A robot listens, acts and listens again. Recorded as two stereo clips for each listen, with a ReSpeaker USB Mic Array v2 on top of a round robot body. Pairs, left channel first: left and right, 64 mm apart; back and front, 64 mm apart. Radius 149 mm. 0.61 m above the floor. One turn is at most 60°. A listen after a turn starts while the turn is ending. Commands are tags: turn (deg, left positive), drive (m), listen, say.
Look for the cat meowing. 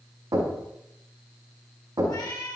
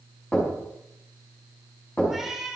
<turn deg="60"/>
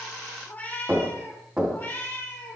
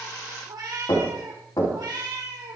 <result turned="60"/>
<turn deg="30"/>
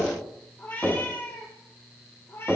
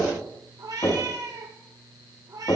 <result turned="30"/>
<turn deg="35"/>
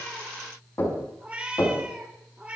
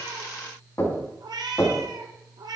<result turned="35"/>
<turn deg="-20"/>
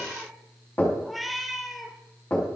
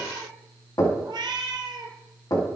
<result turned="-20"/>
<say>Found it: a cat meowing, straight ahead, 1 to 2 m away.</say>